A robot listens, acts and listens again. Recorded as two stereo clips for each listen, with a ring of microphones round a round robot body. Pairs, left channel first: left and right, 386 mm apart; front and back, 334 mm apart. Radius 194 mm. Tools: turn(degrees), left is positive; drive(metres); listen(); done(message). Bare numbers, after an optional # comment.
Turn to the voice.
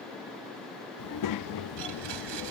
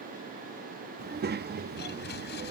# The child speaking: 120° left.
turn(120)
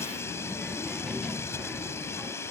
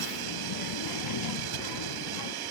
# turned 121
done("Facing the child speaking.")